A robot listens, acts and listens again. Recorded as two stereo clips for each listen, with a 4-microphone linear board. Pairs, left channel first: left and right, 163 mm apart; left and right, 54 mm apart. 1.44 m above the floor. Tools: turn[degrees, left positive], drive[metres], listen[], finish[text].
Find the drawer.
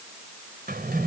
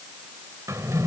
Thought: The drawer: about 70° right or 110° right.
Action: turn[-70]
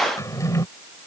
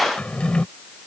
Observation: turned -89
Thought: So it is at 20° left.
Action: turn[20]
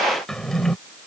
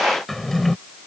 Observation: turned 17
Action: finish[Facing the drawer.]